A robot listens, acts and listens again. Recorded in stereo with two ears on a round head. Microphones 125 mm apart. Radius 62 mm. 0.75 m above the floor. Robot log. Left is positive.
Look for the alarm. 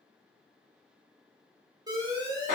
note: The alarm: about 30° right or 150° right.
cmd yaw -30
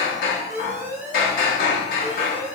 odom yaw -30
note: So it is at 120° right.
cmd yaw -120
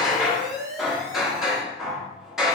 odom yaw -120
note: The alarm is now 25° right.
cmd yaw -25
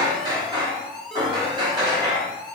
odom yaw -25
end: Found it: an alarm, straight ahead, under 1 m away.